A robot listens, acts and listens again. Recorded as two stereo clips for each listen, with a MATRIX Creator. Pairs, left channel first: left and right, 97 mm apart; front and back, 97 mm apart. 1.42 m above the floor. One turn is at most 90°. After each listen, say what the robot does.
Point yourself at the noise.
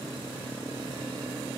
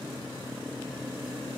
Keep listening.
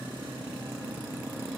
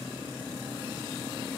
Keep listening.
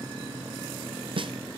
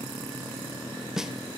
Turn 90° right.
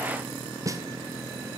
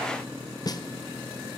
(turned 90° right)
Turn 40° right.
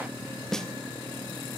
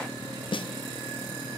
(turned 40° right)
Facing the snare drum, under 1 m away.